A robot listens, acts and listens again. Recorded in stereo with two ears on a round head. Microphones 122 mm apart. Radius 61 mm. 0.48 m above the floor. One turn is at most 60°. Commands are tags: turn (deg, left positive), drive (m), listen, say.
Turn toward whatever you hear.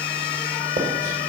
<listen/>
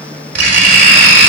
<turn deg="-60"/>
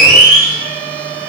<turn deg="-40"/>
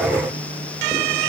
<listen/>
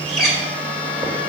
<say>Found it: writing, straight ahead, 1 to 2 m away.</say>